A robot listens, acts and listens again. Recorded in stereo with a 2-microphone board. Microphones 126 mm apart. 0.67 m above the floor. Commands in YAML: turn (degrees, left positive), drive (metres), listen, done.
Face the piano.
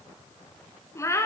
listen: true
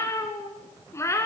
listen: true
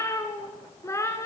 done: "I can't make out a piano, only a cat meowing."